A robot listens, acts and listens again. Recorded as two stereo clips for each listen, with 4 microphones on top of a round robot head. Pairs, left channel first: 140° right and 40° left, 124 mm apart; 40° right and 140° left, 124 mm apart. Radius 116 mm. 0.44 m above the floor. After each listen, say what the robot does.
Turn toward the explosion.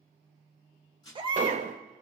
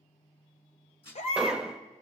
Turn 55° left.
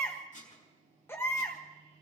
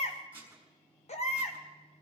I heard an explosion from this way, but can't make it out now.